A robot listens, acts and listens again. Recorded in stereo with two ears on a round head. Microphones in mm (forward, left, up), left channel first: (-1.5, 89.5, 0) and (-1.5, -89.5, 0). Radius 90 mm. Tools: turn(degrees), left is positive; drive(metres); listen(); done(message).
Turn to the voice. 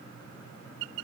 listen()
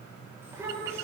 turn(degrees=-30)
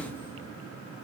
listen()
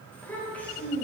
turn(degrees=10)
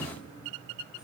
listen()
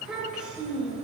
done("Facing the child speaking, over 4 m away.")